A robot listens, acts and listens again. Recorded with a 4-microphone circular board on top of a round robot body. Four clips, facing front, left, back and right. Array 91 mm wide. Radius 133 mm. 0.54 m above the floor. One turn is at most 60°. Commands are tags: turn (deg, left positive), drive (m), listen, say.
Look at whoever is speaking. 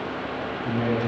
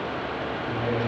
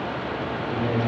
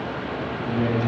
<turn deg="-10"/>
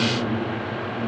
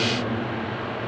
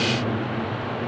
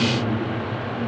<say>Found it: a man speaking, straight ahead, over 4 m away.</say>